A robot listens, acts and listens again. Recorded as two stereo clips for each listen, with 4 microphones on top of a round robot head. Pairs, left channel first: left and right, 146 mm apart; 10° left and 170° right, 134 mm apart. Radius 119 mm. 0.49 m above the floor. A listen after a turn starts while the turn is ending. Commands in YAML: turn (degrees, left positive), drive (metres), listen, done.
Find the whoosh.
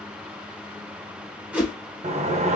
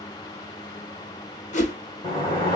turn: -10
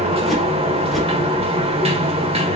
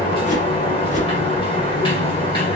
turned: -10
listen: true
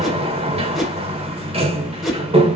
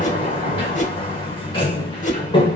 done: "Found it: a whoosh, straight ahead."